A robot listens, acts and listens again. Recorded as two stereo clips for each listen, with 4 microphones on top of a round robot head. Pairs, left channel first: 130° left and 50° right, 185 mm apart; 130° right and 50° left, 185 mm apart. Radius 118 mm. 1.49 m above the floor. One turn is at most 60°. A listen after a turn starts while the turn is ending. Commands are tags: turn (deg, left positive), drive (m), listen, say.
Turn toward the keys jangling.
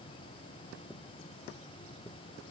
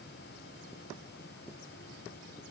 <listen/>
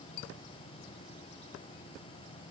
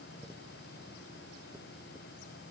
<listen/>
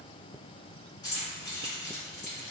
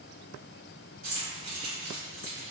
<turn deg="60"/>
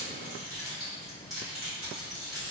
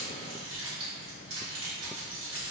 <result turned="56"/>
<turn deg="40"/>
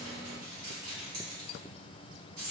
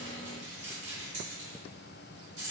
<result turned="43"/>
<say>Found it: keys jangling, straight ahead, 1 to 2 m away.</say>